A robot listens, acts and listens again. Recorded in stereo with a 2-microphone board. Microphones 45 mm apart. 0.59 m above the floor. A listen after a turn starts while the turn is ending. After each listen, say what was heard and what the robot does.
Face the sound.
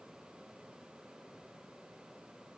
Keep listening.
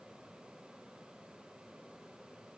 Keep listening.
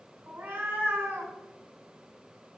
The cat meowing: about 55° right or 125° right. Turn 55° right.
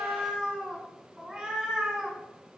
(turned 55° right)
So it is at 15° right. Turn 15° right.
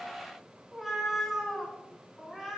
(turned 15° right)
Found it: a cat meowing, straight ahead.